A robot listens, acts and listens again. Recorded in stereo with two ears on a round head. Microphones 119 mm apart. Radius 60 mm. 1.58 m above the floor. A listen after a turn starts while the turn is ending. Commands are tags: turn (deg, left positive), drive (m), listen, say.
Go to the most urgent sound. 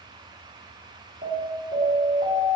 <turn deg="-65"/>
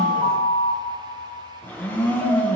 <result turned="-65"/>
<drive m="1.0"/>
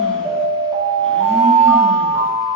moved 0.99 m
<drive m="1.0"/>
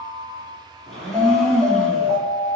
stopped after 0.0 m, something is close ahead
<say>Arrived at the alarm, straight ahead.</say>